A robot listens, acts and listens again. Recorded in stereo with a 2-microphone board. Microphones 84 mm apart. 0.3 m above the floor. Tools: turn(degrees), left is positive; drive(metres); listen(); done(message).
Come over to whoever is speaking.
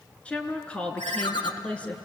turn(degrees=30)
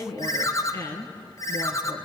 turn(degrees=140)
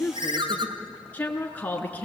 turn(degrees=20)
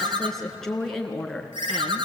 drive(metres=1.0)
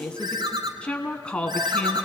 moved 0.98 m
turn(degrees=15)
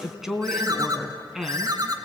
drive(metres=1.0)
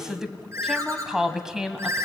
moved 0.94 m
drive(metres=1.0)
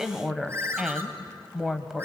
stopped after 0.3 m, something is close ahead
done("Arrived at the woman speaking, straight ahead.")